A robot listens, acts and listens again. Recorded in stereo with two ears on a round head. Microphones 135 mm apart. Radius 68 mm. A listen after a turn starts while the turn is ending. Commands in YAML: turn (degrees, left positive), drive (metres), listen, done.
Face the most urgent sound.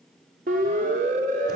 turn: -60
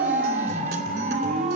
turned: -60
turn: -55
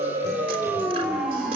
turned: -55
done: "Found it: a siren, straight ahead."